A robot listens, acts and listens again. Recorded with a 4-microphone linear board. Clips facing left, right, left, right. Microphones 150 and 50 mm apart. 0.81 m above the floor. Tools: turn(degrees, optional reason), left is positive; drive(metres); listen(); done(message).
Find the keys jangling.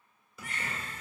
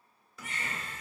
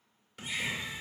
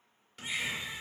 turn(degrees=30)
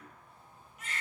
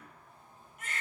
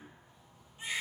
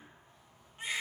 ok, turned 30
turn(degrees=-45, reason="So it is at 45° right.")
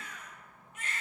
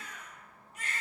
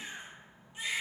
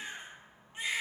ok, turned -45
listen()
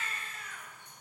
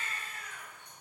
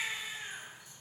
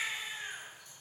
turn(degrees=-60, reason="The keys jangling is now 60° right.")
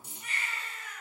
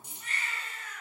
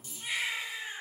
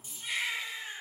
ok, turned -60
turn(degrees=-20, reason="The keys jangling is now 20° right.")
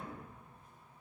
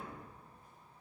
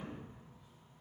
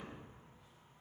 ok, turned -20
turn(degrees=-10, reason="The keys jangling is now 10° right.")
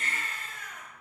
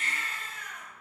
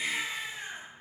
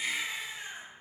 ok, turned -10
listen()
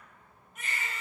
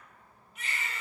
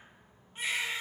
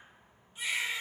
listen()
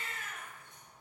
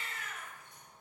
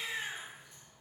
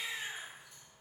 done("Facing the keys jangling, 2 to 4 m away.")